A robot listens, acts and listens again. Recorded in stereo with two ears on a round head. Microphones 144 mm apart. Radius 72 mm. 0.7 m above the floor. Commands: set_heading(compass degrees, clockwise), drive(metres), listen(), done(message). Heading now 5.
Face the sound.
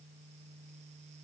listen()
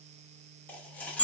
set_heading(335)
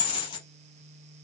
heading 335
set_heading(195)
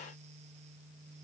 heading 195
done("Facing where the dropped coin came from. I can't hear it now.")